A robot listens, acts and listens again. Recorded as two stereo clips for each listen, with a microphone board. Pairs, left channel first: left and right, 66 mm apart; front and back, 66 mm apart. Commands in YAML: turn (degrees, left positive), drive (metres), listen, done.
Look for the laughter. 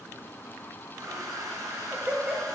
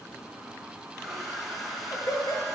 turn: -25
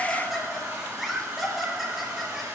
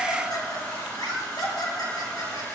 done: "Found it: laughter, straight ahead."